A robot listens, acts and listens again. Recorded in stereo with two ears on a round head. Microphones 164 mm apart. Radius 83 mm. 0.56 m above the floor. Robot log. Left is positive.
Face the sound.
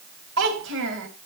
cmd yaw -90
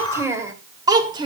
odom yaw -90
note: So it is at 25° right.
cmd yaw -25
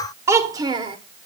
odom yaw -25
note: The child speaking is now 25° right.
cmd yaw -25
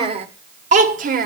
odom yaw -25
note: The child speaking is now 45° right.
cmd yaw -45
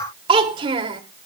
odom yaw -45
note: The child speaking is now 25° right.
cmd yaw -25
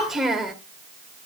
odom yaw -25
end: Found it: a child speaking, straight ahead.